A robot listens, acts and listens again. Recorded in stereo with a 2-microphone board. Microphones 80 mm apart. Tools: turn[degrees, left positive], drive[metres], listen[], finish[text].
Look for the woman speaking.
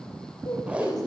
Thought: The woman speaking: about 55° left or 125° left.
Action: turn[55]
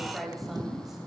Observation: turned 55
Action: finish[Found it: a woman speaking, straight ahead.]